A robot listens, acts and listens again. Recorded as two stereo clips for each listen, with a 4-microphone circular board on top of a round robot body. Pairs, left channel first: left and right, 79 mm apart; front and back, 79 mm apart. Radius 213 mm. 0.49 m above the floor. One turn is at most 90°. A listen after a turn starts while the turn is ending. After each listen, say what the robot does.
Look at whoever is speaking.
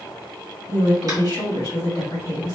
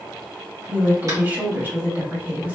Turn 90° left.
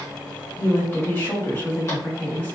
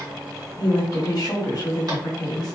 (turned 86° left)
Turn 30° left.
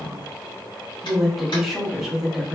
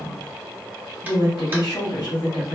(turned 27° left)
Found it: a woman speaking, straight ahead.